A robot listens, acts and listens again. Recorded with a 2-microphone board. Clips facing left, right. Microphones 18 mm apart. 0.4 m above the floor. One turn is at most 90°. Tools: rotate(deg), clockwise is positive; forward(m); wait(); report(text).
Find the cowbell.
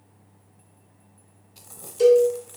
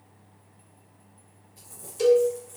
rotate(30)
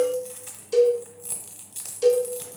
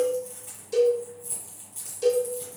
rotate(-15)
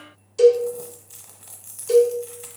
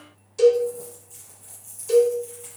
report("Facing the cowbell.")